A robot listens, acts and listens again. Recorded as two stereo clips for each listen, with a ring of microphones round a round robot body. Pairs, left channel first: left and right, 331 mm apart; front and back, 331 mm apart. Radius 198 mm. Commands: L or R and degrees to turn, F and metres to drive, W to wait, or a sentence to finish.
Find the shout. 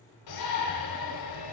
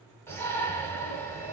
L85
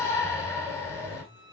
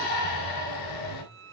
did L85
L10
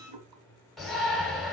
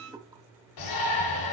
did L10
Found it: a shout, straight ahead.